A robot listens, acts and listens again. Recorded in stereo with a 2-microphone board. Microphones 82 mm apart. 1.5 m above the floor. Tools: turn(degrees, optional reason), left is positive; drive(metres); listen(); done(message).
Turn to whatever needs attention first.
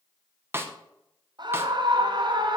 turn(degrees=-60, reason="The scream: about 60° right or 120° right.")
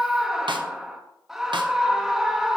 done("Facing the scream.")